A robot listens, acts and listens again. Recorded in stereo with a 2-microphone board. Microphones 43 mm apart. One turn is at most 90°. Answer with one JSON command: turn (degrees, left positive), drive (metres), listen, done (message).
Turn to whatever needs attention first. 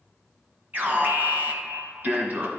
{"turn": -45}
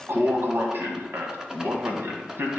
{"turn": -85}
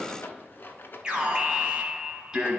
{"turn": -25}
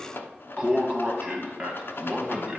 {"turn": -20}
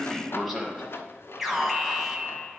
{"done": "Found it: an alarm, straight ahead."}